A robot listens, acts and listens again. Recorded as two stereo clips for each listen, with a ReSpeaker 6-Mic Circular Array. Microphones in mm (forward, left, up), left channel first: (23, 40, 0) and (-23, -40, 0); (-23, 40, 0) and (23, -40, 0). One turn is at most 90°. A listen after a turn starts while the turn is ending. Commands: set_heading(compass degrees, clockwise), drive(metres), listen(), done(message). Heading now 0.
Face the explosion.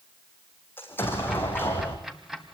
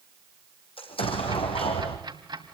set_heading(270)
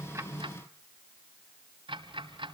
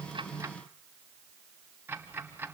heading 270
set_heading(230)
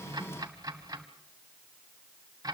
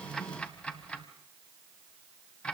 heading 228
done("I heard an explosion from this way, but can't make it out now.")